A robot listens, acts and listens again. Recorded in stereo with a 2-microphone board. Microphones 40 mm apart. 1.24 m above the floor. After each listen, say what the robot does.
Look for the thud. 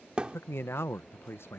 Turn 25° right.
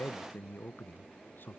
Keep listening.
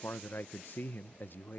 I heard a thud, but can't make it out now. It was about straight ahead or 130° right.